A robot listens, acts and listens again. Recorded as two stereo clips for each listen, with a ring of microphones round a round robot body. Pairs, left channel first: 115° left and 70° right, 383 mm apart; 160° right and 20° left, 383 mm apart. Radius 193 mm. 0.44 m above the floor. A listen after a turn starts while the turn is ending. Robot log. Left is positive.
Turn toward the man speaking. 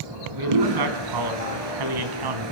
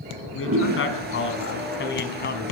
note: The man speaking: 95° right.
cmd yaw -95
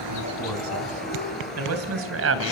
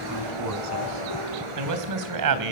note: The man speaking is now 10° right.
cmd yaw -10
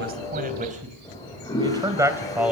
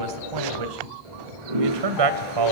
note: The man speaking is now 20° left.
cmd yaw +20
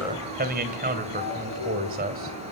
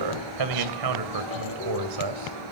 end: Found it: a man speaking, straight ahead, 2 to 4 m away.